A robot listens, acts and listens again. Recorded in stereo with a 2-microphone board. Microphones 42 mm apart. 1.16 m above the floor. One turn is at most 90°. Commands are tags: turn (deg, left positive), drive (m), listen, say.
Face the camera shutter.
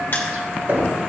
<listen/>
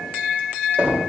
<listen/>
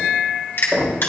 <say>I can't make out a camera shutter to turn to.</say>